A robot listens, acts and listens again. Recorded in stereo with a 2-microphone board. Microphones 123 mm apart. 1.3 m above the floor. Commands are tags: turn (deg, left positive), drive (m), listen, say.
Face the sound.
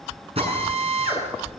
<turn deg="-50"/>
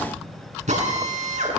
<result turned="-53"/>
<turn deg="-75"/>
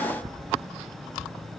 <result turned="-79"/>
<listen/>
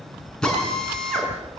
<say>Found it: a drill, straight ahead, over 4 m away.</say>